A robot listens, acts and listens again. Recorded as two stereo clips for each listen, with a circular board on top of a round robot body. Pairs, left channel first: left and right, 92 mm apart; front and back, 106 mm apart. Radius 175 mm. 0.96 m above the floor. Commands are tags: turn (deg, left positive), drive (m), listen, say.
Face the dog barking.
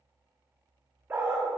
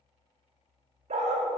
<turn deg="-160"/>
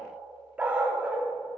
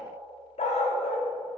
<turn deg="-15"/>
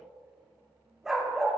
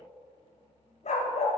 <say>Facing the dog barking, under 1 m away.</say>